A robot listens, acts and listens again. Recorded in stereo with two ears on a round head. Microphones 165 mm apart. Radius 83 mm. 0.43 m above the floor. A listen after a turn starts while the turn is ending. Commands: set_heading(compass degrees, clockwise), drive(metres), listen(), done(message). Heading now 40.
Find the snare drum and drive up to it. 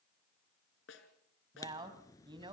set_heading(330)
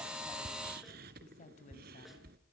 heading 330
listen()
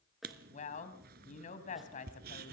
listen()
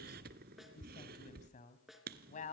drive(1.0)
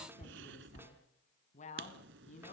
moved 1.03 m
listen()
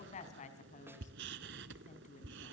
listen()
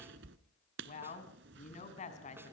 done("Facing where the snare drum came from. I can't hear it now. I did not reach it.")